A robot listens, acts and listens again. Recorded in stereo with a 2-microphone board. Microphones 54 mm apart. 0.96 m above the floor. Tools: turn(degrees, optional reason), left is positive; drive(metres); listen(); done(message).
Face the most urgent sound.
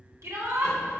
turn(degrees=-65, reason="The shout: about 65° right or 115° right.")
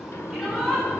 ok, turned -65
done("Found it: a shout, straight ahead.")